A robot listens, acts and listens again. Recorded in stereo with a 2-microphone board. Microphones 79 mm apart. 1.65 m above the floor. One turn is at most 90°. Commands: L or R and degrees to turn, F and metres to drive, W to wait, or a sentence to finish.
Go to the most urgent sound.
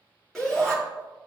L30
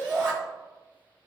R25
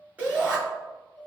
R15
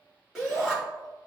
F1.0
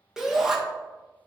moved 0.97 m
F1.0
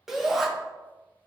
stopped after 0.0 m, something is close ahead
I am next to the shout.